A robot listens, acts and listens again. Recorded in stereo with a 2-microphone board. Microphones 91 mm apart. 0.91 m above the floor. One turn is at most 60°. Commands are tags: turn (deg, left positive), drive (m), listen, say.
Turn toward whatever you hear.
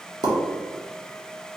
<turn deg="-55"/>
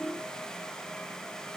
<listen/>
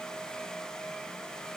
<say>I heard a pop, but can't make it out now. It was about straight ahead or 70° right.</say>